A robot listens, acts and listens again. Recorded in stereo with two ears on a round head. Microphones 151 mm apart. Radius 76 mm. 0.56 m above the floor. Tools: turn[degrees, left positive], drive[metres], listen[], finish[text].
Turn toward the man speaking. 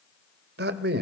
Thought: The man speaking: about 60° right or 120° right.
Action: turn[-60]
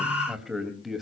Action: finish[Found it: a man speaking, straight ahead, 2 to 4 m away.]